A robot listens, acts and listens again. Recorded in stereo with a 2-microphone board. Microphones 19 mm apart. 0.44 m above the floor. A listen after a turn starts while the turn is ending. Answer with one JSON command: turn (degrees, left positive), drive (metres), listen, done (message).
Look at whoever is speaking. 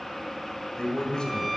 {"turn": 50}
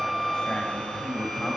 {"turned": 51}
{"turn": 70}
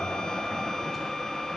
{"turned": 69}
{"listen": true}
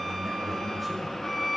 {"listen": true}
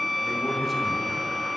{"done": "Facing where the man speaking came from. I can't hear it now."}